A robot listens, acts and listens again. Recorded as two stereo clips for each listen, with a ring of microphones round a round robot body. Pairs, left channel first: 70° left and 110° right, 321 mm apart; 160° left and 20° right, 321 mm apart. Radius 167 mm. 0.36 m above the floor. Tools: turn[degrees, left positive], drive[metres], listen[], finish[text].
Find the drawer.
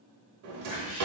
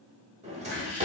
Thought: The drawer: 90° right.
Action: turn[-90]
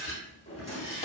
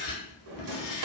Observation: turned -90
Action: finish[Found it: a drawer, straight ahead.]